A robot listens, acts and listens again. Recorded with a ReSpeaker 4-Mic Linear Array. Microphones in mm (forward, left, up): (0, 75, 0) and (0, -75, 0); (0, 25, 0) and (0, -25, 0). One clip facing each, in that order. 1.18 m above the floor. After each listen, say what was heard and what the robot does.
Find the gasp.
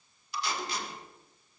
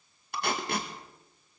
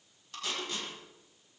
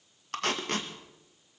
Keep listening.
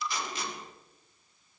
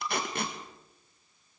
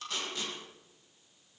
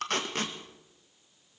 Keep listening.
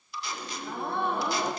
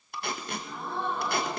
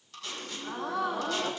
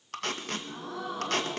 The gasp: about 65° left or 115° left. Turn 65° left.
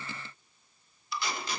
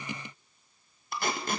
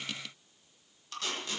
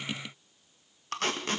Keep listening.
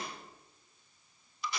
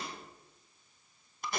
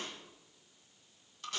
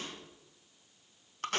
I heard a gasp, but can't make it out now. It was about straight ahead or 50° left.